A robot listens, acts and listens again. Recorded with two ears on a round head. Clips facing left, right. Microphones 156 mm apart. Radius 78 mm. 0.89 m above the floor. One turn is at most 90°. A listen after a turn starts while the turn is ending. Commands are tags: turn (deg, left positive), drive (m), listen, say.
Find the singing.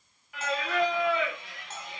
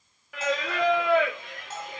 <turn deg="-45"/>
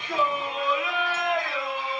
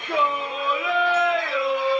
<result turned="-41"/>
<turn deg="-90"/>
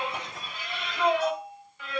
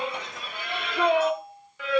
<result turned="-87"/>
<turn deg="-55"/>
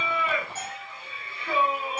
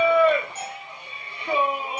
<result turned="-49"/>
<turn deg="-15"/>
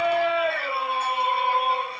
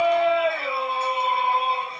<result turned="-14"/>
<say>Facing the singing, 1 to 2 m away.</say>